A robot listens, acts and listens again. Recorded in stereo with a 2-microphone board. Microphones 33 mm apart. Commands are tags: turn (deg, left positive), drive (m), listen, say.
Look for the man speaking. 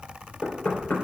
<listen/>
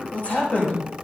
<turn deg="35"/>
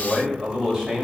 <turn deg="-15"/>
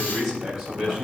<turn deg="-10"/>
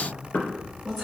<turn deg="-10"/>
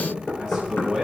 <turn deg="-10"/>
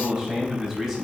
<say>Found it: a man speaking, straight ahead.</say>